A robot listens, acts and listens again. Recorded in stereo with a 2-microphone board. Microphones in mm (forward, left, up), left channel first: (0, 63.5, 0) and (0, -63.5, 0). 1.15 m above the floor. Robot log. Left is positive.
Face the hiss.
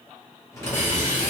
note: The hiss: about 75° left or 105° left.
cmd yaw +75
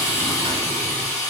note: So it is at 20° left.
cmd yaw +20
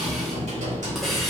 end: Found it: a hiss, straight ahead.